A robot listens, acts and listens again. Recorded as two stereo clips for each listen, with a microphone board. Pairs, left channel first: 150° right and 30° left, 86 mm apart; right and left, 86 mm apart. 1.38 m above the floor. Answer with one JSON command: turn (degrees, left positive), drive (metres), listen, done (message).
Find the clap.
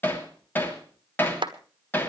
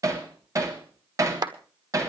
{"turn": 50}
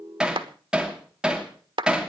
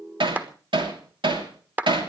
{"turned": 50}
{"turn": 20}
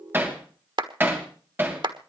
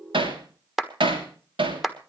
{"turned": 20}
{"done": "Facing the clap."}